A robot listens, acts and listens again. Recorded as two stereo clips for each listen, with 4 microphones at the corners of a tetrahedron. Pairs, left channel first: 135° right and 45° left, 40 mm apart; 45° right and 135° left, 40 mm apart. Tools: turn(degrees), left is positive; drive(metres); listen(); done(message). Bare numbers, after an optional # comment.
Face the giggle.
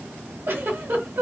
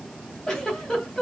# The giggle: 35° left.
turn(35)
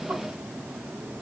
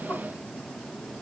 listen()
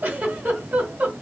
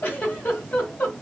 done("Facing the giggle, 1 to 2 m away.")